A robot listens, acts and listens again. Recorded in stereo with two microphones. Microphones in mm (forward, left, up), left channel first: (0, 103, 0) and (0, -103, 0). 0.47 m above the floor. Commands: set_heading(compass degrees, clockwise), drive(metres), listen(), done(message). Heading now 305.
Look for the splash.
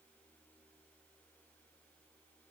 listen()
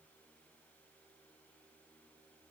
listen()
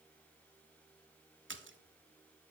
set_heading(15)
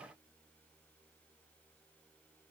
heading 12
listen()
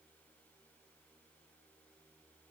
done("I heard a splash, but can't make it out now. It was about straight ahead or 45° right.")